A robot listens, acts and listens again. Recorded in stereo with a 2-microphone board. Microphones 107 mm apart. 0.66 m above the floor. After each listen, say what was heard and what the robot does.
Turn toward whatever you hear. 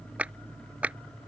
Turn 30° right.
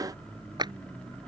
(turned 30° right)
So it is at 135° right. Turn 135° right.
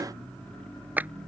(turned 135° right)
The clap is now 15° right. Turn 15° right.
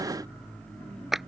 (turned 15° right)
Found it: a clap, straight ahead.